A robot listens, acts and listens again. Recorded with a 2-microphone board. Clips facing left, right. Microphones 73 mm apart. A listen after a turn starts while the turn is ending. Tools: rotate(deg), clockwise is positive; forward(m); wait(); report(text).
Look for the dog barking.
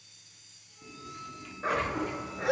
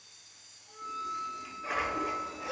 rotate(-65)
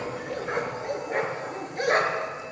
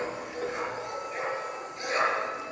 rotate(-50)
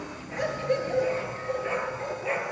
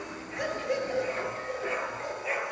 report("Facing the dog barking.")